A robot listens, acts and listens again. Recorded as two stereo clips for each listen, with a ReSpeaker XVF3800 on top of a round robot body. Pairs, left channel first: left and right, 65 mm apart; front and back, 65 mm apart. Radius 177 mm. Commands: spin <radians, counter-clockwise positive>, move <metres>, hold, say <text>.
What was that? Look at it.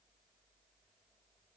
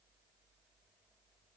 hold
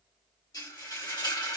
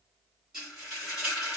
spin 1.57
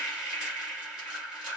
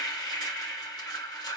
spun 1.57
spin -0.26
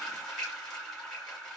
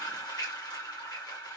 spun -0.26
say Facing the frying.